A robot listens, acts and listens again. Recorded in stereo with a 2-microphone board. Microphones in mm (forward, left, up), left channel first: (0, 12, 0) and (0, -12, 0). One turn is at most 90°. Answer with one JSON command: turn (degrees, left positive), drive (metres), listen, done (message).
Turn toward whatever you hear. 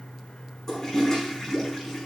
{"turn": 15}
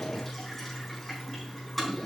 {"done": "Facing the toilet flushing, 2 to 4 m away."}